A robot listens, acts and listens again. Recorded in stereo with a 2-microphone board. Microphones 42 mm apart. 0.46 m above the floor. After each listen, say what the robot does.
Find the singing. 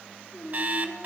Turn 90° left.
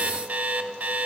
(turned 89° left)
Found it: singing, straight ahead.